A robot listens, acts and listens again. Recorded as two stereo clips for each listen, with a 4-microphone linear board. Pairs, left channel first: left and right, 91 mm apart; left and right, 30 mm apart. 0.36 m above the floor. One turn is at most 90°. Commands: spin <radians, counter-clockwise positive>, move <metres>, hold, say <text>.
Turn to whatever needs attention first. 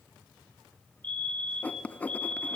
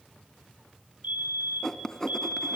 spin -1.13
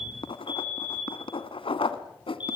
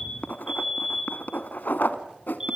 spin -0.35
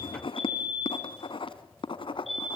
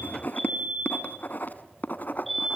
say Found it: a fire alarm, straight ahead.